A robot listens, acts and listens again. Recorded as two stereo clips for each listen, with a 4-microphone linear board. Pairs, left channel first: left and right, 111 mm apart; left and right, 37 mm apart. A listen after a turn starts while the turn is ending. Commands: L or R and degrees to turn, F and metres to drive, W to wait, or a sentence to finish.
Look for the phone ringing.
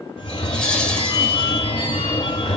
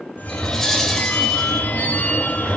L55
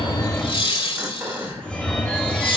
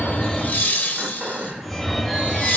L10
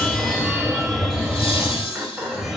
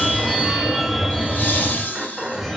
Facing the phone ringing, under 1 m away.